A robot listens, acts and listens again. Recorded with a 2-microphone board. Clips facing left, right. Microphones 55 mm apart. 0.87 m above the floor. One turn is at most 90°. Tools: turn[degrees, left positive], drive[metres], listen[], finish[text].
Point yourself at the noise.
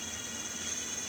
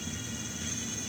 Action: listen[]
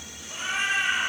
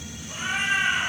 Action: turn[-30]
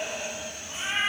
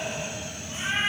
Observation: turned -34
Thought: So it is at 20° left.
Action: turn[20]
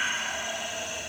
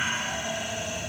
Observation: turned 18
Action: finish[Facing the cat meowing.]